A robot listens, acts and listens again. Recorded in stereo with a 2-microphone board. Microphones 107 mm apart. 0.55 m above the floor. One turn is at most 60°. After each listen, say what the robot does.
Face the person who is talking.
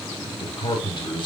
Turn 45° left.
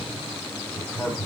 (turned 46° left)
Found it: a man speaking, straight ahead.